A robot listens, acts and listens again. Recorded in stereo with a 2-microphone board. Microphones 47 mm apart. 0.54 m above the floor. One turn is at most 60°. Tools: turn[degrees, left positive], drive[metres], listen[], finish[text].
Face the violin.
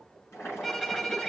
Action: turn[30]
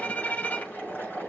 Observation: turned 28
Thought: So it is at 145° left.
Action: turn[60]
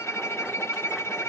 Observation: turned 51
Thought: The violin is now 90° left.
Action: turn[60]
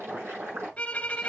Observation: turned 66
Thought: The violin is now 25° left.
Action: turn[25]
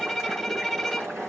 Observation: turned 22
Action: finish[Facing the violin, 1 to 2 m away.]